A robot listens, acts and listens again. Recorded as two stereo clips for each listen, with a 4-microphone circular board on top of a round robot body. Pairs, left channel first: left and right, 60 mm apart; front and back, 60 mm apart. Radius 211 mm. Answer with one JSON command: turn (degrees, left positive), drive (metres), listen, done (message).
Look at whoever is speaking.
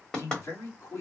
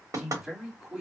{"turn": 100}
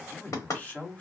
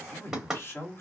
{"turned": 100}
{"turn": 35}
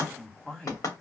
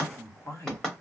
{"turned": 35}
{"turn": 20}
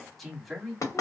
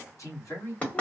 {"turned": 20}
{"done": "Found it: a man speaking, straight ahead."}